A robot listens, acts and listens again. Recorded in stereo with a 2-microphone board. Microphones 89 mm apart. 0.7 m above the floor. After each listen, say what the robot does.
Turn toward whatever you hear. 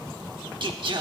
Turn 65° right.
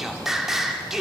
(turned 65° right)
Found it: singing, straight ahead.